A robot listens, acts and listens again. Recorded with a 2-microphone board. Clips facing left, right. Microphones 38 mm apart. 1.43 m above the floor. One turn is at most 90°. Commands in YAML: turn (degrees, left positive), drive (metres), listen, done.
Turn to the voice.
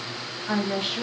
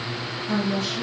turn: 30
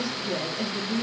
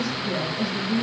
done: "Facing the woman speaking."